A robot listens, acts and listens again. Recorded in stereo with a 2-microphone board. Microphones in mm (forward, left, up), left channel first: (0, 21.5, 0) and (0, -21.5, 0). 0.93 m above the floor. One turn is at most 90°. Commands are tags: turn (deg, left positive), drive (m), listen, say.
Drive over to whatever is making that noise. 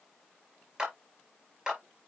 <turn deg="-20"/>
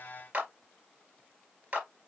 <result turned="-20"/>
<turn deg="-90"/>
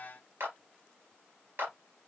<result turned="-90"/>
<turn deg="-55"/>
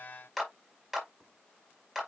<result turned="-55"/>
<drive m="1.0"/>
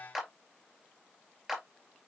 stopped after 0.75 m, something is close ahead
<say>Something is in my way. I am facing the clap but have not reached it.</say>